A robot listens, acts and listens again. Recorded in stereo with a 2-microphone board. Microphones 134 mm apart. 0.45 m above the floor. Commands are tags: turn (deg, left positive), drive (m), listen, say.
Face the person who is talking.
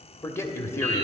<turn deg="20"/>
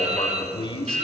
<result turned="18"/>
<turn deg="145"/>
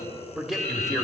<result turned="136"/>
<say>Found it: a man speaking, straight ahead.</say>